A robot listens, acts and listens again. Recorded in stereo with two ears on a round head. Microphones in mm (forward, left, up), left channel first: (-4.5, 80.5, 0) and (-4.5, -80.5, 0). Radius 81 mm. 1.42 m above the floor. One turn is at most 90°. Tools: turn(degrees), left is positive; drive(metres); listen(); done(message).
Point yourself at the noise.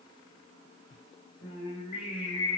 turn(degrees=30)
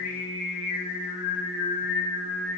turn(degrees=90)
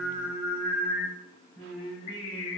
turn(degrees=35)
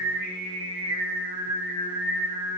done("Facing the singing, over 4 m away.")